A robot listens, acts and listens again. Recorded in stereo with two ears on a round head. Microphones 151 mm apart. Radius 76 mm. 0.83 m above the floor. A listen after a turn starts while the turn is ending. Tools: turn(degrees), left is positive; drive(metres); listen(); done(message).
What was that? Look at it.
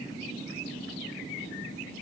listen()
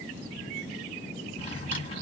turn(degrees=35)
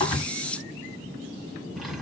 done("Facing the drawer, 1 to 2 m away.")